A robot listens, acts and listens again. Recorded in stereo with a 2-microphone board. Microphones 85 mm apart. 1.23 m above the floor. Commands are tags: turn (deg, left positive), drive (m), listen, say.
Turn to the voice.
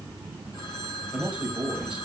<turn deg="-30"/>
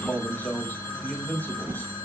<turn deg="20"/>
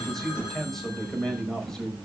<say>Found it: a man speaking, straight ahead.</say>